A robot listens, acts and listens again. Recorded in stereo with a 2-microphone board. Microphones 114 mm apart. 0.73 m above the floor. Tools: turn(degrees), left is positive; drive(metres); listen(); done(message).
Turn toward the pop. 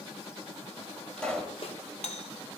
turn(degrees=30)
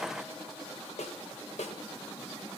listen()
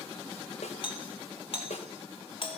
done("I heard a pop, but can't make it out now. It was about 20° right or 140° left.")